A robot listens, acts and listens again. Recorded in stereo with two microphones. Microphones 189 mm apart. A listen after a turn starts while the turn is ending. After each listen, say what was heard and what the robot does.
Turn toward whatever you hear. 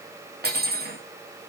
The cutlery clinking: about 60° right or 120° right. Turn 60° right.
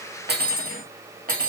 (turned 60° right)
So it is at 55° right. Turn 55° right.
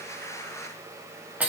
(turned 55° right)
The cutlery clinking is now 10° right. Turn 10° right.
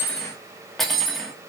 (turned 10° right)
Found it: cutlery clinking, straight ahead, 2 to 4 m away.